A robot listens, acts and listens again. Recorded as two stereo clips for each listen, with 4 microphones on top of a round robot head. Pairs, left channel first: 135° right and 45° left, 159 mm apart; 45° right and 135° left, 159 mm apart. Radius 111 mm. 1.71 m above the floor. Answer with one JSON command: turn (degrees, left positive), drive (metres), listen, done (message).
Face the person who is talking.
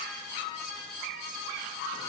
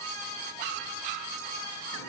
{"listen": true}
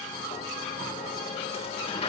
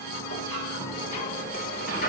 {"listen": true}
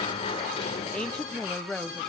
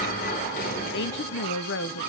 {"turn": -50}
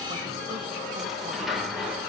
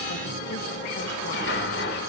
{"listen": true}
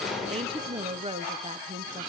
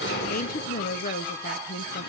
{"turn": -10}
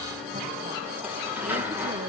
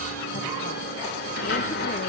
{"listen": true}
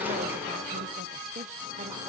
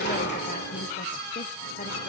{"listen": true}
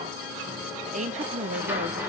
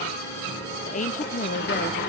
{"done": "Facing the woman speaking, 1 to 2 m away."}